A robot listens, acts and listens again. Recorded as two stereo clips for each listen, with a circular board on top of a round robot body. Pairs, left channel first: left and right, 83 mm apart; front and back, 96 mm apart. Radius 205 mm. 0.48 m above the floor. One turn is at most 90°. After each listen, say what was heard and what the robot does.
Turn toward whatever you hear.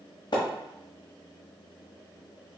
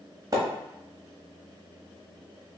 The splash: 125° left. Turn 90° left.
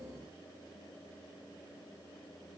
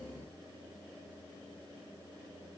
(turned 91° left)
Nothing new. It was at 35° left. Turn 35° left.
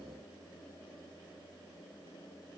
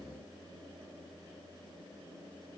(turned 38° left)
Facing where the splash came from. I can't hear it now.